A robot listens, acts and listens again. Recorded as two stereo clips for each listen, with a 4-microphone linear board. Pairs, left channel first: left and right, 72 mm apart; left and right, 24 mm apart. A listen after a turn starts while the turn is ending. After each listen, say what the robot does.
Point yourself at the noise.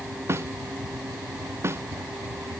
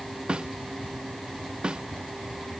Turn 35° right.
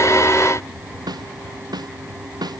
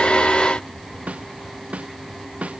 Turn 110° right.
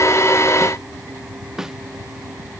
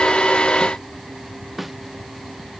Facing the snare drum.